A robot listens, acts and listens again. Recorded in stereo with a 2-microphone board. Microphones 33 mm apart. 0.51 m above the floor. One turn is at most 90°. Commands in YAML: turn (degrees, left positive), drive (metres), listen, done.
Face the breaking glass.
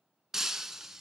turn: -30
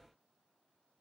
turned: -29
listen: true
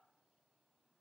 done: "I heard breaking glass, but can't make it out now. It was about 15° left or 140° right."